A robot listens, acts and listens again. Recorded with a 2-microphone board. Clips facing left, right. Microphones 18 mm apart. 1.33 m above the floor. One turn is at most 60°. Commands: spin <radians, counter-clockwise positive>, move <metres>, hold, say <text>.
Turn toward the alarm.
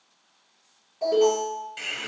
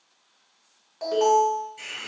spin -0.61
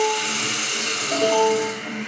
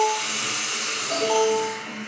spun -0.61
spin -1.05
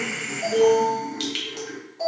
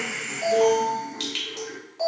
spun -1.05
spin -0.79
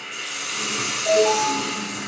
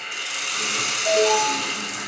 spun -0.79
say Found it: an alarm, straight ahead.